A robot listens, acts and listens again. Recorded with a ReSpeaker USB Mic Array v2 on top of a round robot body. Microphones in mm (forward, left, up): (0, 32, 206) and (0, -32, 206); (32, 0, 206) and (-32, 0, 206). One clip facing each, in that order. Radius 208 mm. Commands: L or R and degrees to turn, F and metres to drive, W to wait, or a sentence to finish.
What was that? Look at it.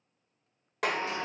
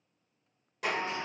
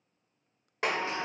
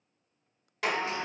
L65
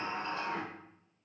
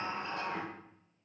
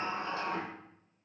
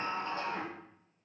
Found it: a sliding door, straight ahead.